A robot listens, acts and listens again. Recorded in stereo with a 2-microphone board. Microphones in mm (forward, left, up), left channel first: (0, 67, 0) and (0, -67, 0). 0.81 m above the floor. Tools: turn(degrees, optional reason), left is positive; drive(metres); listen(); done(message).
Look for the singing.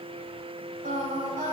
turn(degrees=-90)
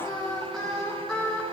done("Facing the singing.")